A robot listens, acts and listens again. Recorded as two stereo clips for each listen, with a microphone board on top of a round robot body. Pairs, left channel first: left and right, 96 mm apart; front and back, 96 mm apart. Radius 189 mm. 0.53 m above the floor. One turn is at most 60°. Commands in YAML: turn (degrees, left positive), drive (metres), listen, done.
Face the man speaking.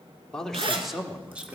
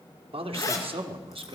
turn: -60
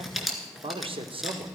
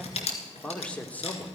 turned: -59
turn: -60
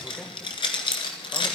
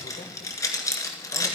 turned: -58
turn: -10
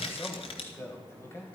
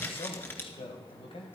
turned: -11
turn: 30
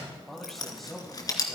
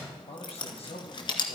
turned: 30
done: "Found it: a man speaking, straight ahead, 2 to 4 m away."